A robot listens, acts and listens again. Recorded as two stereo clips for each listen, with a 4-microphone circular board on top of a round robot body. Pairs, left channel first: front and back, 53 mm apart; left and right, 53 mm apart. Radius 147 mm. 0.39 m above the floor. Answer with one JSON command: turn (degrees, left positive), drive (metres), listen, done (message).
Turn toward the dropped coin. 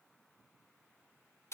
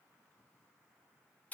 {"listen": true}
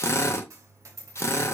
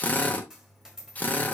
{"turn": -170}
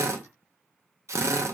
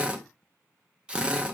{"done": "I heard a dropped coin from this way, but can't make it out now."}